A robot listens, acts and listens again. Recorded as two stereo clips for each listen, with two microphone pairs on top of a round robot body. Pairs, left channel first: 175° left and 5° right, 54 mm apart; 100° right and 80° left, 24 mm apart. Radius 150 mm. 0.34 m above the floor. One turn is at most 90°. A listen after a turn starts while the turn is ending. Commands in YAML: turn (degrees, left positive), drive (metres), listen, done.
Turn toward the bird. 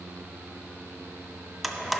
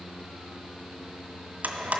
listen: true
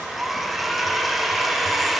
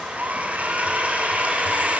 listen: true
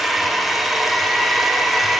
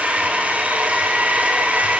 done: "I can't make out a bird to turn to."